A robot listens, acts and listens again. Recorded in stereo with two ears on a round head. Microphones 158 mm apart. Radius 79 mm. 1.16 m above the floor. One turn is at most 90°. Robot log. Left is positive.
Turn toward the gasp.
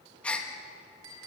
cmd yaw +30
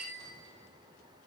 cmd idle
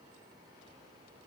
end: I heard a gasp, but can't make it out now. It was about 25° right or 145° left.